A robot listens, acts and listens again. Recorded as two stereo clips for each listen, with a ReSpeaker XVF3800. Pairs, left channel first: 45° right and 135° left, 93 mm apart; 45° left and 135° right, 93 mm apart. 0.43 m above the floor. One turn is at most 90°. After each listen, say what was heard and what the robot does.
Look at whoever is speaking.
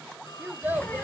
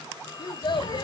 The child speaking: 65° left. Turn 65° left.
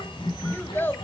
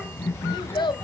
The child speaking is now 20° left. Turn 20° left.
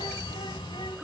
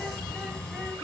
Keep listening.
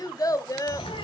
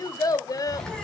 Found it: a child speaking, straight ahead, under 1 m away.